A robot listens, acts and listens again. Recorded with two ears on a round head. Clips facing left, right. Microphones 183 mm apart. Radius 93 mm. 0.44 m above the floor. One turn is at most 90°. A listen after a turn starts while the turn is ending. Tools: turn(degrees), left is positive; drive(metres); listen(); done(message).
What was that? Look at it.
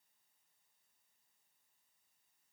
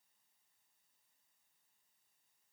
listen()
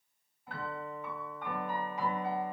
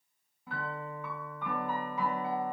turn(degrees=-75)
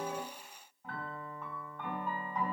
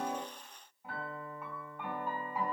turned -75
turn(degrees=-10)
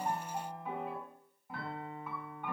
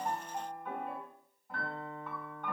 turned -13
done("Facing the piano.")